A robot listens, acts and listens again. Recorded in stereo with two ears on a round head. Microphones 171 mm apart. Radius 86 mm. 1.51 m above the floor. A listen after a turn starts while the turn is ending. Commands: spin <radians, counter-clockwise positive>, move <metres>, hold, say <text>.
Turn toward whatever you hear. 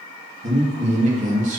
spin -0.70
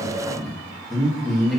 say Found it: a man speaking, straight ahead.